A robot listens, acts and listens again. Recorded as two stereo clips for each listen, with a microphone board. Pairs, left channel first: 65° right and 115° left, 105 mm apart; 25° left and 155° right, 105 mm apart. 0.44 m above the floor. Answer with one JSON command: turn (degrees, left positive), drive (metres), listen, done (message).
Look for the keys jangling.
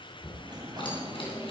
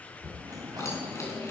{"turn": -40}
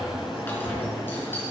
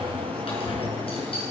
{"done": "Found it: keys jangling, straight ahead, over 4 m away."}